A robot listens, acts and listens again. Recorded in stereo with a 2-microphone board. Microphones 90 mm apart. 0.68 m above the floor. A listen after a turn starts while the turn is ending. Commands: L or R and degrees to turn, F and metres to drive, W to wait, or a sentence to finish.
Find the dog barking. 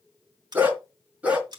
R30
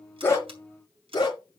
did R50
L50
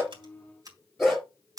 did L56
Found it: a dog barking, straight ahead.